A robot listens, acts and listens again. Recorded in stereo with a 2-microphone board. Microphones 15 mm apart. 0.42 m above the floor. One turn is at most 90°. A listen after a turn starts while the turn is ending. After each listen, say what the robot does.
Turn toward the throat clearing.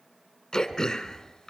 Turn 35° left.
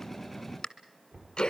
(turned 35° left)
Turn 90° left.
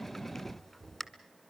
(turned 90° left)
Turn 30° left.
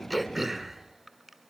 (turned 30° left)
Facing the throat clearing.